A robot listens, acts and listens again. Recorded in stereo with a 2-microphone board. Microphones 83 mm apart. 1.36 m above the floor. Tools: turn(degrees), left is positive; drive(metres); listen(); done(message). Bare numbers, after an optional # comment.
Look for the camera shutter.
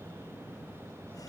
listen()
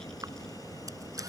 listen()
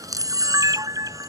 # The camera shutter: about 45° right or 135° right.
turn(-45)
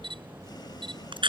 # So it is at 90° right.
turn(-90)
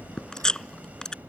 done("Found it: a camera shutter, straight ahead.")